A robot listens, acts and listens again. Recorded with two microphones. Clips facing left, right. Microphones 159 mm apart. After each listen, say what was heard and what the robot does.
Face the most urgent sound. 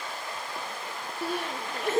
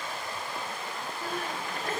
Turn 90° left.
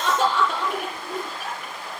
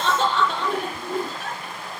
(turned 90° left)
So it is at 10° left. Turn 10° left.
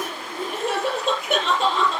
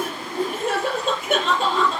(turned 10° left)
Facing the crying, over 4 m away.